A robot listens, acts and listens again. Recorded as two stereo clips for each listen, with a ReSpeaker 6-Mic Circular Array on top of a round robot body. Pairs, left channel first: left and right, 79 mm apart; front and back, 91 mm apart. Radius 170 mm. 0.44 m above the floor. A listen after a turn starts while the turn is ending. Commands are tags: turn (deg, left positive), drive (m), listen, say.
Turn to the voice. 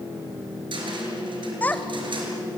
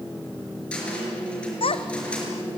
<turn deg="20"/>
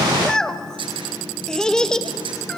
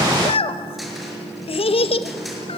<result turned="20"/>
<turn deg="10"/>
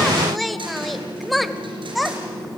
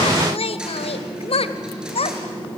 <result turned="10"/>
<say>Found it: a child speaking, straight ahead, 1 to 2 m away.</say>